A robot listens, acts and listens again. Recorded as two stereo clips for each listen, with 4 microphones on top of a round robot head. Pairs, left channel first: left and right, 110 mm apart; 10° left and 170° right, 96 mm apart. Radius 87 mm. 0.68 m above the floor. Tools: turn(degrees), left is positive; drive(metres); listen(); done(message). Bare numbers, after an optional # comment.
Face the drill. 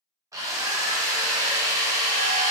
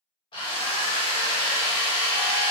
# The drill: 25° right.
turn(-25)
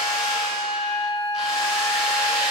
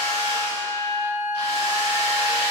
done("Found it: a drill, straight ahead, 1 to 2 m away.")